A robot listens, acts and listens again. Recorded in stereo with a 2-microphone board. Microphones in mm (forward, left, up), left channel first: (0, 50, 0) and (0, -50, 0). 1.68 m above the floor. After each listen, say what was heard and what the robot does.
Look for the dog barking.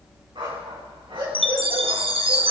The dog barking: about 65° right or 115° right. Turn 65° right.
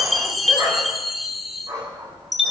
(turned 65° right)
So it is at 45° right. Turn 45° right.
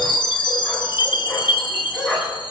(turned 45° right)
The dog barking is now 10° left. Turn 10° left.
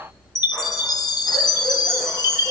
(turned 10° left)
Keep listening.
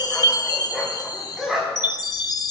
Found it: a dog barking, straight ahead.